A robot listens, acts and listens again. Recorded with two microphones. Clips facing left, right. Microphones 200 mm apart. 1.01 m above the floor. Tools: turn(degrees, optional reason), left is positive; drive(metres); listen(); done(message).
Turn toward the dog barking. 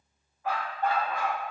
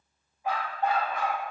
turn(degrees=-20, reason="The dog barking: about 20° right or 160° right.")
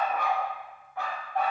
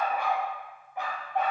turn(degrees=-20, reason="The dog barking: about 20° right or 160° right.")
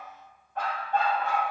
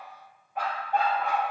turn(degrees=-15, reason="The dog barking: about 15° right or 165° right.")
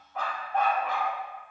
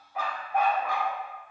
turn(degrees=-30)
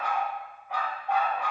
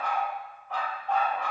turn(degrees=10, reason="So it is at 10° left.")
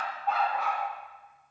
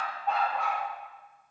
done("Facing the dog barking, 2 to 4 m away.")